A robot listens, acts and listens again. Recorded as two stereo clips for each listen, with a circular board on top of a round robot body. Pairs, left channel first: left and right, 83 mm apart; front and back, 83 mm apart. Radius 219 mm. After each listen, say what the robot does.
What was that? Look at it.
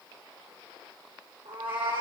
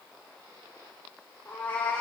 Turn 70° right.
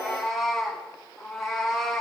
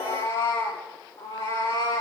Found it: a cat meowing, straight ahead, over 4 m away.